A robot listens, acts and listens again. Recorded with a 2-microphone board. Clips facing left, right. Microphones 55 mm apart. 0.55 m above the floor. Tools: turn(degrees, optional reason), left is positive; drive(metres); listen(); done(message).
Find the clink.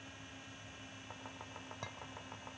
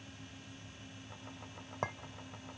turn(degrees=-40, reason="The clink: about 40° right or 140° right.")
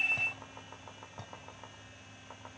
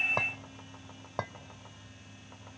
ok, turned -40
turn(degrees=-100, reason="So it is at 100° right.")
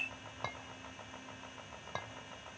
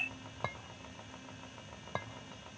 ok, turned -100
turn(degrees=-10, reason="The clink is now 10° right.")
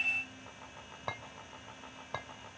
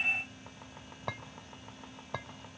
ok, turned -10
done("Facing the clink, 1 to 2 m away.")